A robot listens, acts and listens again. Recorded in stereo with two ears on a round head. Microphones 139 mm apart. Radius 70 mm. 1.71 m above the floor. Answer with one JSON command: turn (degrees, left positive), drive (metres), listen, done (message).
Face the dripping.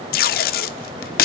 {"listen": true}
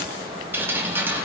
{"turn": -30}
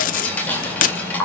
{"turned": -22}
{"turn": 10}
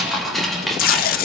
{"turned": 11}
{"done": "Facing the dripping, 2 to 4 m away."}